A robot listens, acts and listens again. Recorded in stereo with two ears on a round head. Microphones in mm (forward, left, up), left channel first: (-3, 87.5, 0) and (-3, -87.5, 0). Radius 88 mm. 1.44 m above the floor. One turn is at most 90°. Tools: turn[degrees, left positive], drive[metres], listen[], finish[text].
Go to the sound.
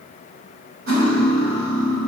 Action: turn[-90]
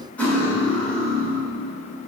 Action: drive[1.0]
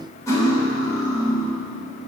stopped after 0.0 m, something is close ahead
Thought: The cutlery clinking is now 15° left.
Action: turn[15]
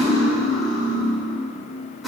Action: finish[Something is in my way. I am facing the cutlery clinking but have not reached it.]